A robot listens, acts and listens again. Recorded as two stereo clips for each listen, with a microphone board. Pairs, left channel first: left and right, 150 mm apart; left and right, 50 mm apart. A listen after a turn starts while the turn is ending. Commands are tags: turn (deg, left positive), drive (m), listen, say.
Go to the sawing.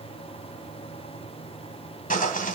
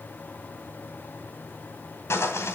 <turn deg="70"/>
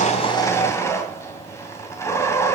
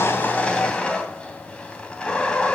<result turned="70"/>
<turn deg="20"/>
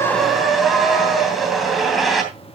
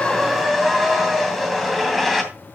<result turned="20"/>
<drive m="1.0"/>
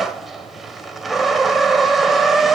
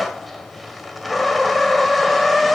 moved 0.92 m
<drive m="1.0"/>
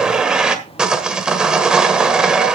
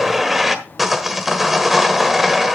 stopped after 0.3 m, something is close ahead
<say>Arrived at the sawing, straight ahead.</say>